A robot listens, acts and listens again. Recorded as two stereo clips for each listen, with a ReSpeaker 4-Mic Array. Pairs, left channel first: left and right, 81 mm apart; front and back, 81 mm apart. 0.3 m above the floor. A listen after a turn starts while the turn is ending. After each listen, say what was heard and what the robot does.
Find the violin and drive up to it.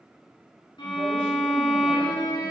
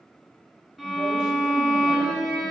The violin: 90° left. Turn 90° left.
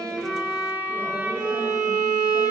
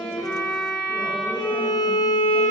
The violin is now 20° right. Turn 20° right.
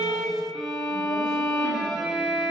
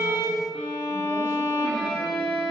Drive 1.0 m forward.
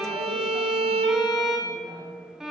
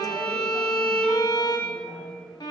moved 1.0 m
Drive 1.0 m forward.
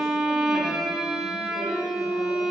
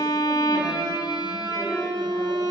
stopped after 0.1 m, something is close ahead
Arrived at the violin, straight ahead.